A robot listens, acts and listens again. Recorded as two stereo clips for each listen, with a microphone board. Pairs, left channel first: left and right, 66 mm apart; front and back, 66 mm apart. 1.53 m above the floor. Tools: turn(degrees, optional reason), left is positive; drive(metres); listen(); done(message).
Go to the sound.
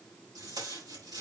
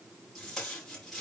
turn(degrees=-90, reason="The tape being pulled: 90° right.")
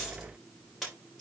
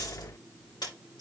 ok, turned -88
drive(metres=1.0)
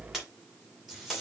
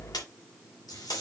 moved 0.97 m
drive(metres=1.0)
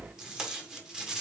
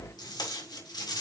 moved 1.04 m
turn(degrees=-10, reason="The tape being pulled is now 10° right.")
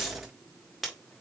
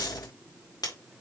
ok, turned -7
drive(metres=1.0)
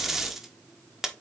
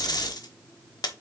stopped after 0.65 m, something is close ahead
done("Arrived at the tape being pulled, straight ahead.")